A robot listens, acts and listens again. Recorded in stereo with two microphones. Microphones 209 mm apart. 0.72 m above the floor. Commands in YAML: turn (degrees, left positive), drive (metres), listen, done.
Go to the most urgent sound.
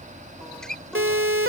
turn: -70
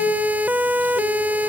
turn: -10
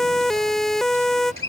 drive: 1.0
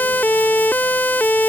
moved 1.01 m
turn: 10
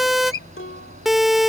drive: 1.0
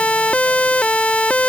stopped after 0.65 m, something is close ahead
done: "Arrived at the siren, straight ahead."